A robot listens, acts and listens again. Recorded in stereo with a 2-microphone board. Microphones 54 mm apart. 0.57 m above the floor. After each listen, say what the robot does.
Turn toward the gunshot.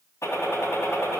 Turn 65° left.
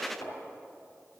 Keep listening.
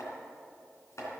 I heard a gunshot, but can't make it out now. It was about straight ahead or 50° left.